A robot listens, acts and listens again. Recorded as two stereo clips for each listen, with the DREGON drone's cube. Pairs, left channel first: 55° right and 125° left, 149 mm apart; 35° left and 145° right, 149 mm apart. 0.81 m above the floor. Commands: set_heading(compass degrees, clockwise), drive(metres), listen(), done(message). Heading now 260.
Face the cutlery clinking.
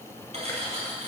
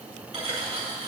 set_heading(90)
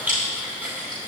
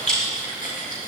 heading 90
listen()
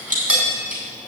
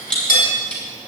set_heading(45)
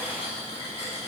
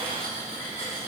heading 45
listen()
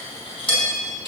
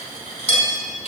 done("Facing the cutlery clinking.")